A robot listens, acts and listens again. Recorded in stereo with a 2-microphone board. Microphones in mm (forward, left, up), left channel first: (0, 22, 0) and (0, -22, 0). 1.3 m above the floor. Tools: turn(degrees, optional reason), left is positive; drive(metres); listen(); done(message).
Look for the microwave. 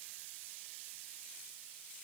listen()
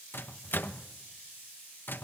turn(degrees=55, reason="The microwave: about 55° left or 125° left.")
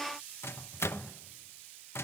turn(degrees=70, reason="So it is at 70° left.")
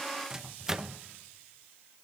turn(degrees=-15, reason="The microwave is now 15° right.")
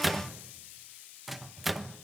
done("Found it: a microwave, straight ahead, 1 to 2 m away.")